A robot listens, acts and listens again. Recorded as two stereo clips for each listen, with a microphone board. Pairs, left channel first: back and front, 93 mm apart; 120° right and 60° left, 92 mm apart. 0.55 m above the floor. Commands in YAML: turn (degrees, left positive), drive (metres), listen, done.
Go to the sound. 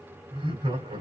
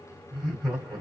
turn: -30
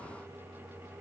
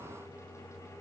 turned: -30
listen: true
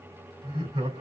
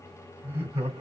drive: 1.0
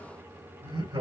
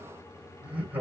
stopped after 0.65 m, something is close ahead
turn: -10
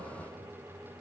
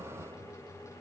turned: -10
listen: true
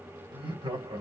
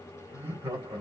done: "Something is in my way. I am facing the laughter but have not reached it."